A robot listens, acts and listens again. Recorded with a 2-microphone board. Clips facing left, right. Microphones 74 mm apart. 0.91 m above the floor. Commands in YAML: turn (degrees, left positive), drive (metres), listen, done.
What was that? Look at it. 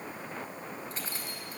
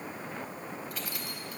turn: 30
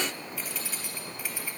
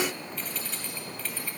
turn: 10
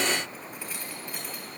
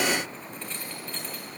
turn: 10
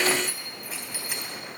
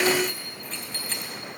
turn: 10
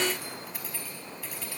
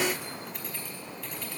done: "Facing the keys jangling, over 4 m away."